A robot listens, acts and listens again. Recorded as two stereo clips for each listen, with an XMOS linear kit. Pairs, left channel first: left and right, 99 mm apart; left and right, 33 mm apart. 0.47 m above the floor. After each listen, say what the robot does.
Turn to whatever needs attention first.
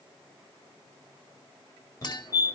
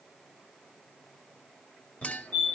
Turn 35° left.
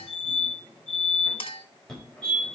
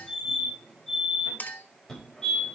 Turn 10° left.
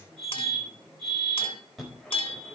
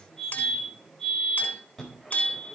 Facing the fire alarm.